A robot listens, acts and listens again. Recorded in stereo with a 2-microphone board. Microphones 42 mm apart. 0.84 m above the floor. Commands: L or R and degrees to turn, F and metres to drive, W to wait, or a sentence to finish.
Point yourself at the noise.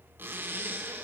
R55
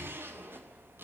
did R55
R70
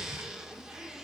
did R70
R15
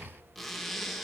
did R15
Found it: a zipper, straight ahead.